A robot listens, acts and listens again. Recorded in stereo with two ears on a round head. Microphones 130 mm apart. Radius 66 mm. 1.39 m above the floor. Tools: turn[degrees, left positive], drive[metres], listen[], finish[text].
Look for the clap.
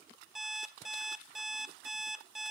Action: listen[]
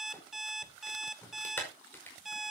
Action: turn[30]
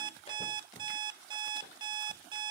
Action: listen[]
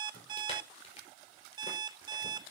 Action: listen[]
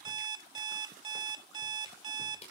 Thought: So it is at 135° left.
Action: turn[135]
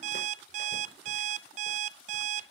Action: listen[]
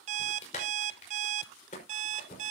Thought: The clap is now 50° left.
Action: turn[50]
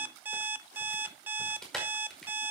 Action: finish[Facing the clap, over 4 m away.]